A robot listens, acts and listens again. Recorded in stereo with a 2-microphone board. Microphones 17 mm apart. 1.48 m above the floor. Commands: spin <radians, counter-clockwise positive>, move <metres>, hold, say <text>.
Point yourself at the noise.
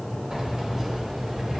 spin -0.79
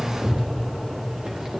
spin -1.75
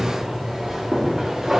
spin -0.70
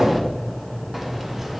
say Facing the keys jangling, 1 to 2 m away.